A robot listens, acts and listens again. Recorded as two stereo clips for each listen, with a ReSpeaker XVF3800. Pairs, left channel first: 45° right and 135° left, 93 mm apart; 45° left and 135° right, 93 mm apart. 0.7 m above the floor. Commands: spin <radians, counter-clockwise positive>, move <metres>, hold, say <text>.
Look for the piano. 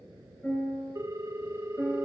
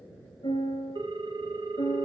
spin 0.52
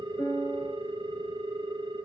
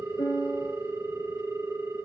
say Facing the piano, over 4 m away.